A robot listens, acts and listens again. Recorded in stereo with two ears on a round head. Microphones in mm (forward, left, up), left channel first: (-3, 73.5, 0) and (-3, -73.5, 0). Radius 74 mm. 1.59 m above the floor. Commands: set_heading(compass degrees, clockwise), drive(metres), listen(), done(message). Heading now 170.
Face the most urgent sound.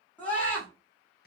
set_heading(140)
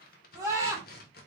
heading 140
set_heading(160)
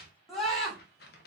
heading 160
done("Found it: a scream, straight ahead.")